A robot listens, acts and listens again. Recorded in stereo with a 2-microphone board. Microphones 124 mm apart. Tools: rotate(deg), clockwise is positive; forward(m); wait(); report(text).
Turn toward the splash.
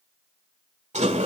wait()
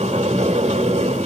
wait()
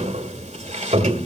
report("I can't make out a splash to turn to.")